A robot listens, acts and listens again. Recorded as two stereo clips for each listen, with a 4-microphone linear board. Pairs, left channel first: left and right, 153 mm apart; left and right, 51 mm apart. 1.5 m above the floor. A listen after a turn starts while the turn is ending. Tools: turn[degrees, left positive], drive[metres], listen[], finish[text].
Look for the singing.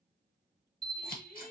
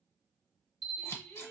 Thought: The singing: about 60° left or 120° left.
Action: turn[60]
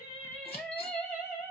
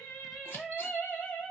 Thought: So it is at 20° left.
Action: turn[20]
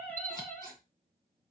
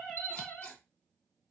Thought: The singing is now 10° left.
Action: turn[10]
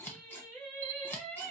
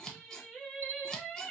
Thought: The singing is now 10° left.
Action: turn[10]
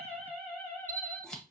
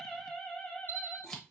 Action: finish[Facing the singing.]